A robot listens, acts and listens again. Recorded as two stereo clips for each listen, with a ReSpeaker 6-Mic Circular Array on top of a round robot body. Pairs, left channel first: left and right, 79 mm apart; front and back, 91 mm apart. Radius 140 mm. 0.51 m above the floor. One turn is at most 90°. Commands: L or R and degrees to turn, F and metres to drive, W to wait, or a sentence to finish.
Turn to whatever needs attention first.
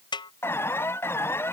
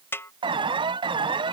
L90
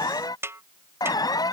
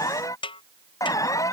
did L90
L55
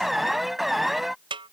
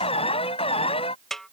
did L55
Facing the alarm.